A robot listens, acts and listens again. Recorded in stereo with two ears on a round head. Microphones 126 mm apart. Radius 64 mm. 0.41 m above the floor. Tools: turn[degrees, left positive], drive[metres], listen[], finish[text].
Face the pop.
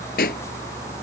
Thought: The pop: about 75° left or 105° left.
Action: turn[75]
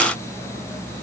Action: listen[]
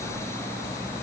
Action: finish[I heard a pop, but can't make it out now. It was about straight ahead or 30° left.]